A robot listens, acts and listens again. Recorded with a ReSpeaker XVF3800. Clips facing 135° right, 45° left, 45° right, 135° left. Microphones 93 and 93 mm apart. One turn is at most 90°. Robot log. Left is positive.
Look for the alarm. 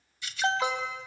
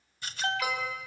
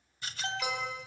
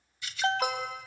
note: The alarm: 165° left.
cmd yaw +90
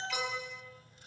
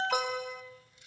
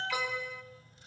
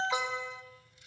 note: The alarm is now 70° left.
cmd yaw +70
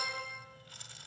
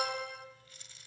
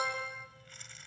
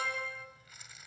note: The alarm is now 20° left.
cmd yaw +20
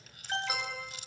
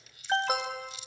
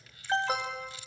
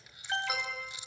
end: Found it: an alarm, straight ahead, 2 to 4 m away.